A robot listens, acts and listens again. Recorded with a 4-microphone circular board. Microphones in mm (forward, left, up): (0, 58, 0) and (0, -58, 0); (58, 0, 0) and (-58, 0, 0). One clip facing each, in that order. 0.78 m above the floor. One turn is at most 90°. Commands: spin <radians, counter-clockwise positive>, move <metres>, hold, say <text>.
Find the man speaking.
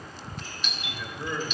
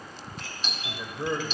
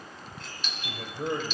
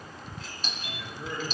spin -0.52
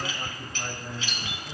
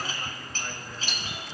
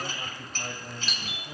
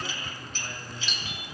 spin 0.44
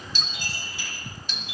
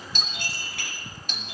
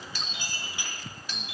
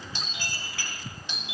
hold
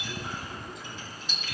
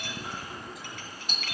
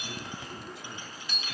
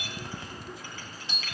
hold
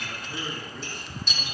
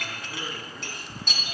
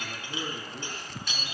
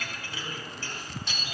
say Found it: a man speaking, straight ahead, over 4 m away.